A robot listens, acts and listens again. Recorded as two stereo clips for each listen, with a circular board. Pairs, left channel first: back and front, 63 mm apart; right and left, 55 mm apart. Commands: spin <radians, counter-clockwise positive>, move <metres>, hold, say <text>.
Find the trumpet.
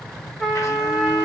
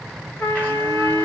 spin -1.66
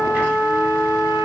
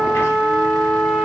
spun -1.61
say Found it: a trumpet, straight ahead, 1 to 2 m away.